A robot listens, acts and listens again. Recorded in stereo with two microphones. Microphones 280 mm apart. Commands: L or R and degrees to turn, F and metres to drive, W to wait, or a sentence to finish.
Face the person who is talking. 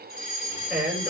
R30
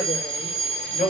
L25
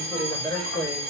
L15
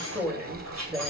Found it: a man speaking, straight ahead, over 4 m away.